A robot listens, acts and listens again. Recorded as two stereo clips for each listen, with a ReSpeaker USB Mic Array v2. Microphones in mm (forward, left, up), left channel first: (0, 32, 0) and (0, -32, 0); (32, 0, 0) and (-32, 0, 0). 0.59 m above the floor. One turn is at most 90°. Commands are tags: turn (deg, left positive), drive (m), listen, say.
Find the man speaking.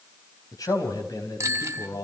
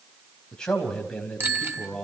<turn deg="75"/>
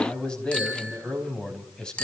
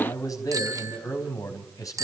<turn deg="15"/>
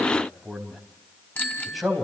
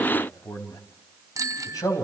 <say>Found it: a man speaking, straight ahead.</say>